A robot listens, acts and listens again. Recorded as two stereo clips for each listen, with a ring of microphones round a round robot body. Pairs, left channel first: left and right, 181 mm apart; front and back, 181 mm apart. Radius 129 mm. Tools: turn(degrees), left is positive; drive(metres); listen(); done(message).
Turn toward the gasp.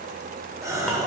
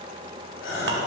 turn(degrees=-15)
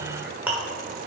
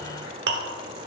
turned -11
done("I heard a gasp from this way, but can't make it out now.")